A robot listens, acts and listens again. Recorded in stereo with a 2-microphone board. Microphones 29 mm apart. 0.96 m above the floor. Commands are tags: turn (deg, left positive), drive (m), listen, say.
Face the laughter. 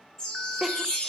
<turn deg="-30"/>
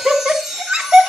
<turn deg="-140"/>
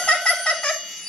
<turn deg="35"/>
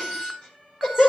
<turn deg="15"/>
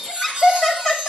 <say>Found it: laughter, straight ahead, over 4 m away.</say>